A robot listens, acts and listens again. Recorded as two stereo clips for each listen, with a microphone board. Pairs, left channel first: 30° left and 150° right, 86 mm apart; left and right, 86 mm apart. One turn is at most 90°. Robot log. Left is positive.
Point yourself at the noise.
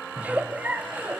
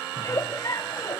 note: The giggle: 140° left.
cmd yaw +90
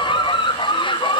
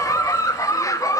note: The giggle is now 40° left.
cmd yaw +40
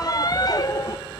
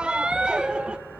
note: The giggle is now 10° right.
cmd yaw -10
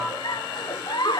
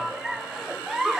end: Found it: a giggle, straight ahead.